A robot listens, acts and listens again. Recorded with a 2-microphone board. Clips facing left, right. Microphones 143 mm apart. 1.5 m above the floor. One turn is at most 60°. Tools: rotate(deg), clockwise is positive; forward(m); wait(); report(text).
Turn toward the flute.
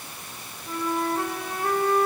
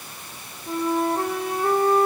rotate(30)
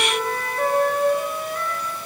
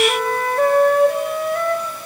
rotate(60)
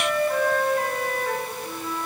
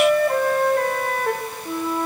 rotate(60)
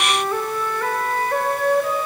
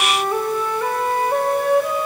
rotate(15)
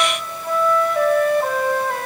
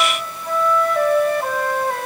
report("Facing the flute, 1 to 2 m away.")